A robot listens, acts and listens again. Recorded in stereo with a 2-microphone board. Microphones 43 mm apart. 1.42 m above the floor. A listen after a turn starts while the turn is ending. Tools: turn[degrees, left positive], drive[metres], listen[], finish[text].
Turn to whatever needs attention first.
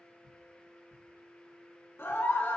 Thought: The scream: about 65° left or 115° left.
Action: turn[65]
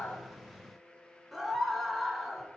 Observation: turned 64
Action: finish[Found it: a scream, straight ahead.]